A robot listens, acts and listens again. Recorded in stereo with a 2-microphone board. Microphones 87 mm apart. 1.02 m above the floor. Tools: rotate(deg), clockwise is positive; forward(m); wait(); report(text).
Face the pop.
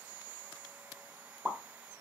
rotate(20)
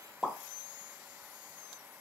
report("Facing the pop.")